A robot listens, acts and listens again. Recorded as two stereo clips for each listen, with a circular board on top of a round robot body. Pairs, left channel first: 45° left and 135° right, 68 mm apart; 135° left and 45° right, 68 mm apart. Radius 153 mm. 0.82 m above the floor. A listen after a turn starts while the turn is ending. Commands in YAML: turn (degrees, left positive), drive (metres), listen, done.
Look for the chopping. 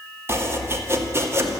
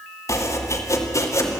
turn: 175
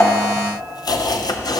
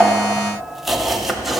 turn: 45
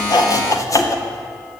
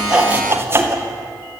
turn: 10
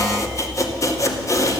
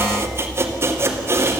turn: 10
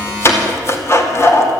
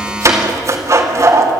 done: "Facing the chopping, 2 to 4 m away."